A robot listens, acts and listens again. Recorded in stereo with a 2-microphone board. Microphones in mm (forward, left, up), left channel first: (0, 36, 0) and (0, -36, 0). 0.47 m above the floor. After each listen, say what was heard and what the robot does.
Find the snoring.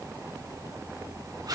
Keep listening.
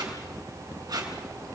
Keep listening.
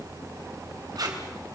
I can't make out snoring to turn to.